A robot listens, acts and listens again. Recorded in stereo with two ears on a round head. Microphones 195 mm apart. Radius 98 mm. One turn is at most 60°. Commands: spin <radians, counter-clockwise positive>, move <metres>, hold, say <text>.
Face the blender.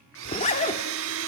spin -1.05
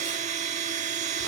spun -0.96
spin -0.61
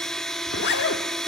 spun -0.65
say Found it: a blender, straight ahead, 1 to 2 m away.